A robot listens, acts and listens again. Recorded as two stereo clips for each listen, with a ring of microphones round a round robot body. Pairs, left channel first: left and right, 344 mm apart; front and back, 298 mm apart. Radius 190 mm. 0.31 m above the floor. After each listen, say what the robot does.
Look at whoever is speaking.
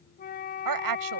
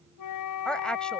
Turn 85° right.
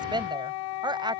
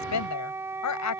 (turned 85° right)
Turn 15° right.
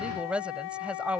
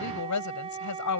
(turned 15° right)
Facing the woman speaking.